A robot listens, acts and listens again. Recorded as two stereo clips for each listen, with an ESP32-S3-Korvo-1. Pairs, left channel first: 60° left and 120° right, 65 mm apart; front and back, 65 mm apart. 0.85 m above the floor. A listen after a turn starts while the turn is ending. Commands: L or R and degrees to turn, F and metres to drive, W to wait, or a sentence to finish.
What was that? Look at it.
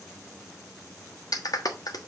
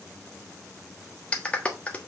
L70
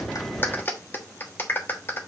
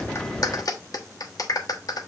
Found it: a clap, straight ahead.